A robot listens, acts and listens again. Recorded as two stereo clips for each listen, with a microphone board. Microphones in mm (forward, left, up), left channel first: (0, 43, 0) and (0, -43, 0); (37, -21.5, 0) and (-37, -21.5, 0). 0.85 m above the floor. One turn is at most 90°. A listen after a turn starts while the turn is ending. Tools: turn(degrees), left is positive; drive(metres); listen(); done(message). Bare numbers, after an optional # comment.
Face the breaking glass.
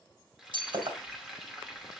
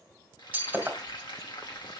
# The breaking glass: 110° right.
turn(-90)
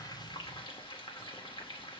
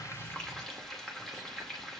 # Nothing new. It was at 20° right.
turn(-20)
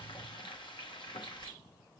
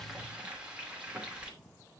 done("I heard breaking glass from this way, but can't make it out now.")